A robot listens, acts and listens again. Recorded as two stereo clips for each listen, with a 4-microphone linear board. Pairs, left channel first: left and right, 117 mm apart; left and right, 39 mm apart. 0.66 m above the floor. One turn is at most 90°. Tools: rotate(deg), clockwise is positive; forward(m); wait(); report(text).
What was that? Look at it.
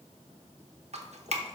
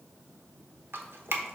rotate(70)
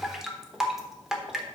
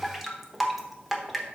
report("Found it: dripping, straight ahead.")